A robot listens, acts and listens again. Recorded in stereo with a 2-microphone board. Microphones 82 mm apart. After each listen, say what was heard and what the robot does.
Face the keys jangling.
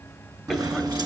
The keys jangling: about 55° right or 125° right. Turn 55° right.
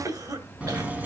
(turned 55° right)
So it is at 20° right. Turn 20° right.
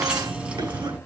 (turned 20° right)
The keys jangling is now 20° right. Turn 20° right.
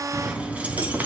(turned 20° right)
The keys jangling is now 20° right. Turn 20° right.
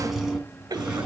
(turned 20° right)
The keys jangling is now 10° right. Turn 10° right.
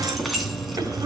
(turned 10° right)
Facing the keys jangling.